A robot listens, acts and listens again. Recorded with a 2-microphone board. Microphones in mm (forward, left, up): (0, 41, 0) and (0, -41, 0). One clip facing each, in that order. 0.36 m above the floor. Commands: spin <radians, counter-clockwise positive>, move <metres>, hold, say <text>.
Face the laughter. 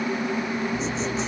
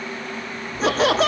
spin -1.57
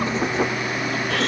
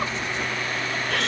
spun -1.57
hold
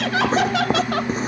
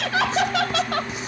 say Found it: laughter, straight ahead.